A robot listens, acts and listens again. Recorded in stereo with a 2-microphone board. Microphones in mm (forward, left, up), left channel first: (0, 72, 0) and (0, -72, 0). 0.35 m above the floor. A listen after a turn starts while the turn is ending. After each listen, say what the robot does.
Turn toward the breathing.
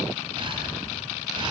Turn 40° right.
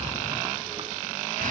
Turn 100° right.
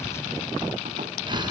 Turn 35° right.
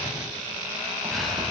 Keep listening.
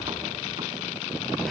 Keep listening.
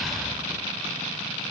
I heard breathing from this way, but can't make it out now.